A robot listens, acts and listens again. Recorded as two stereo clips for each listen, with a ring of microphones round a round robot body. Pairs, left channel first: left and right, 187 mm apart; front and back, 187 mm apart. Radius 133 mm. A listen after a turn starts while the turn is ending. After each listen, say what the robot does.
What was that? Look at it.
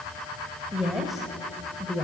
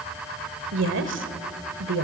Turn 170° left.
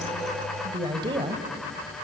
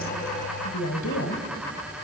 Turn 25° right.
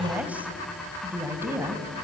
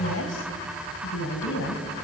Turn 15° right.
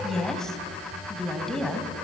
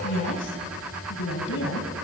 Found it: a woman speaking, straight ahead.